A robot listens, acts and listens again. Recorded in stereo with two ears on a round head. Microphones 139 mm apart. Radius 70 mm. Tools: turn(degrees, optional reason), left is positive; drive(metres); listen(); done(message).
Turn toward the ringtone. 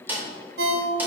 turn(degrees=-75, reason="The ringtone: about 75° right or 105° right.")
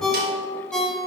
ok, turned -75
done("Facing the ringtone, under 1 m away.")